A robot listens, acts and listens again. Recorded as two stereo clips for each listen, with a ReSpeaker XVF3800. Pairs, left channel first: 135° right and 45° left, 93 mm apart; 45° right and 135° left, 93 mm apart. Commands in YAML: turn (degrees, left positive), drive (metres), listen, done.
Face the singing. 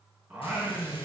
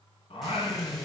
turn: -35
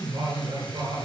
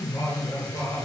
done: "Found it: singing, straight ahead."